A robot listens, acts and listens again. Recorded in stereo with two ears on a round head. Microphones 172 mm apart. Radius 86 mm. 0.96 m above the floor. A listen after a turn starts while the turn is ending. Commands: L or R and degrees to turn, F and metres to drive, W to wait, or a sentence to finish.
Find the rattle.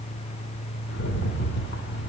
L60
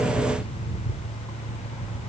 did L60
Facing the rattle.